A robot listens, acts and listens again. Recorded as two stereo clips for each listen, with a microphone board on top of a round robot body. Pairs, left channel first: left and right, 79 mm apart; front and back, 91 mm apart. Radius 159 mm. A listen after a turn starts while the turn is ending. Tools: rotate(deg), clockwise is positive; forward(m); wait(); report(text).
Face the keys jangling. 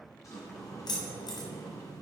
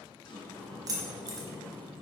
rotate(-130)
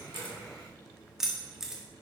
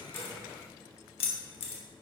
report("Found it: keys jangling, straight ahead.")